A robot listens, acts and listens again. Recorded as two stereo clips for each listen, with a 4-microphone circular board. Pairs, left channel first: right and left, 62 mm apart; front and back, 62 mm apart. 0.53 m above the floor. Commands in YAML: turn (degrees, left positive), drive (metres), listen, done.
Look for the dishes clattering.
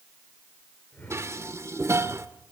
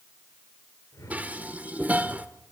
turn: 120
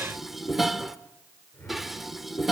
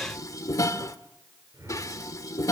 done: "Found it: dishes clattering, straight ahead, 1 to 2 m away."